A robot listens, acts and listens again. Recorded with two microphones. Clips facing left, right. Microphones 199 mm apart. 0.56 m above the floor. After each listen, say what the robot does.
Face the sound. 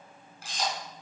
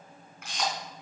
Turn 35° left.
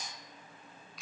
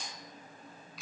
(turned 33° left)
Facing the camera shutter, 2 to 4 m away.